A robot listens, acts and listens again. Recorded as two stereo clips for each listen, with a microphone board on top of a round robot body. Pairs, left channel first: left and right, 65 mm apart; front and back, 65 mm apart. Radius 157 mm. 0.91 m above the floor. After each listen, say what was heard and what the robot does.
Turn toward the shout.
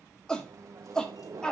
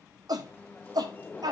The shout: 170° left. Turn 170° left.
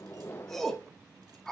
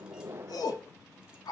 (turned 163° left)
Facing the shout.